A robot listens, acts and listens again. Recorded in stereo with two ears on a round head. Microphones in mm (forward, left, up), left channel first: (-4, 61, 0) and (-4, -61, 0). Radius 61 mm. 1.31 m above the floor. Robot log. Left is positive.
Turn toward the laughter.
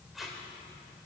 cmd idle
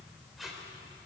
cmd idle
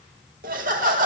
note: The laughter: about 65° right or 115° right.
cmd yaw -65
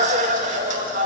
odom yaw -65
note: So it is at 55° right.
cmd yaw -55
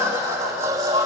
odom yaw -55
note: The laughter is now 25° right.
cmd yaw -25
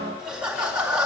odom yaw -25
end: Facing the laughter, 2 to 4 m away.